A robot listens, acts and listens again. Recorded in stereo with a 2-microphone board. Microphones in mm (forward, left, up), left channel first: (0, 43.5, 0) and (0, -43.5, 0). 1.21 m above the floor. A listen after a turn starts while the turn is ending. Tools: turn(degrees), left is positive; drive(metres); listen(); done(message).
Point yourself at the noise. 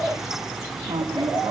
turn(degrees=-50)
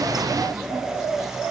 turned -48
listen()
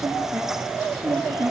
turn(degrees=-10)
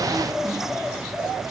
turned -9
listen()
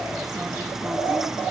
listen()
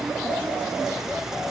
done("I heard a squeak from this way, but can't make it out now.")